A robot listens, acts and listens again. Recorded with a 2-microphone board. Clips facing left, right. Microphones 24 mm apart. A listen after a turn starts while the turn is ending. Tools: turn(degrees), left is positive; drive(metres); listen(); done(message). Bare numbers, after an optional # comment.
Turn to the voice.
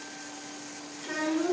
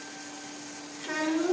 turn(-30)
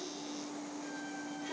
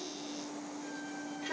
# So it is at 140° right.
turn(-140)
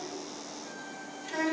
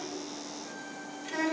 # The child speaking is now 15° right.
turn(-15)
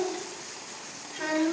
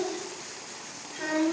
done("Found it: a child speaking, straight ahead.")